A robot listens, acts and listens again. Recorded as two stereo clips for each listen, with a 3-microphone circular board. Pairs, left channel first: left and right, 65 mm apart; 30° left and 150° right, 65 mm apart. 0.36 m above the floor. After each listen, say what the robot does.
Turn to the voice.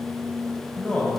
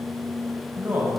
Turn 155° left.
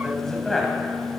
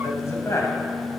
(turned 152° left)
Found it: a man speaking, straight ahead, 2 to 4 m away.